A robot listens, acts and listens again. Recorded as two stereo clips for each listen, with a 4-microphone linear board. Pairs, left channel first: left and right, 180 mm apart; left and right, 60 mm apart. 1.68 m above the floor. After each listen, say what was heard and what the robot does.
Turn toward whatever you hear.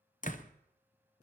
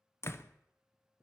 The door slam: about 45° left or 135° left. Turn 45° left.
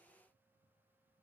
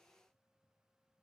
Keep listening.
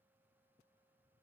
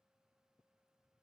I heard a door slam, but can't make it out now. It was about straight ahead or 90° left.